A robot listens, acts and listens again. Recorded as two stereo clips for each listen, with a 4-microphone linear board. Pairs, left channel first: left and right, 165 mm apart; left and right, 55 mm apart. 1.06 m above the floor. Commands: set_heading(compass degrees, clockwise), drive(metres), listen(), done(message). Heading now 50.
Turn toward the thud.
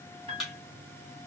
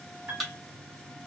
set_heading(20)
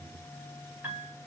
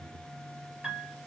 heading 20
listen()
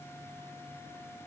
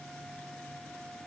done("I heard a thud, but can't make it out now. It was about 30° right or 150° left.")